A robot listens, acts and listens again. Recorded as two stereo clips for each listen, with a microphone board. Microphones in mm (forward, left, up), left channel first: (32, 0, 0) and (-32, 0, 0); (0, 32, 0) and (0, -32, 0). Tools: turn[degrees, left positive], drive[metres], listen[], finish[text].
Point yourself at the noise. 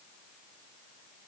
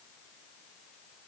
Action: listen[]
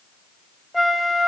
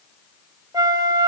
Thought: The flute: 90° right.
Action: turn[-90]
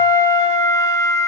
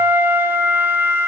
Thought: The flute is now 30° right.
Action: turn[-30]
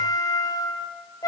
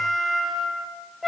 Action: finish[Found it: a flute, straight ahead.]